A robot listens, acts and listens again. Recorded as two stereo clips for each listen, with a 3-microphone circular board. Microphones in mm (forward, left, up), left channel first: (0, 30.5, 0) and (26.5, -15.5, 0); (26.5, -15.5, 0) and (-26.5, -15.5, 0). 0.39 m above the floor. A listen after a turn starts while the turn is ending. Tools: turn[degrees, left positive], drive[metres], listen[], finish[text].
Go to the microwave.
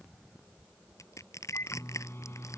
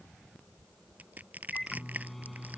Thought: The microwave: 85° left.
Action: turn[85]
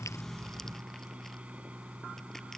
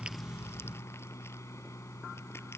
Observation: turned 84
Action: drive[1.0]
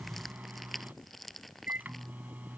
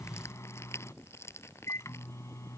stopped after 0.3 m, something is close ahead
Thought: The microwave is now 10° right.
Action: turn[-10]
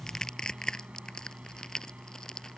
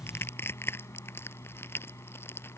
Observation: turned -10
Action: finish[Blocked. The microwave is further on, straight ahead.]